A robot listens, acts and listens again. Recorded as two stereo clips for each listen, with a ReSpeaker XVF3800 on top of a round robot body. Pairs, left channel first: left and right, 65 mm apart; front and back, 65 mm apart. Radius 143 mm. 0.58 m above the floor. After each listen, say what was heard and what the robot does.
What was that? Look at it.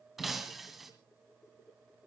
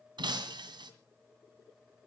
The breaking glass: 175° right. Turn 175° right.
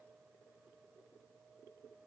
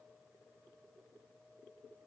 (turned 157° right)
Nothing new. It was at 20° right. Turn 20° right.
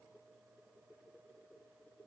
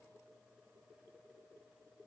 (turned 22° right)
I heard breaking glass from this way, but can't make it out now.